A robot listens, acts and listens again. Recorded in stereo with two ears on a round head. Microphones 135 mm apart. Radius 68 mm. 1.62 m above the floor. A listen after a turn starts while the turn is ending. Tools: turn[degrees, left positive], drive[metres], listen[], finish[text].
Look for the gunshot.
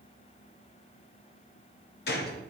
Thought: The gunshot: about 70° left or 110° left.
Action: turn[70]
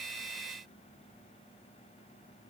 Action: listen[]
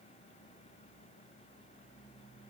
Action: finish[I heard a gunshot, but can't make it out now. It was about straight ahead or 40° left.]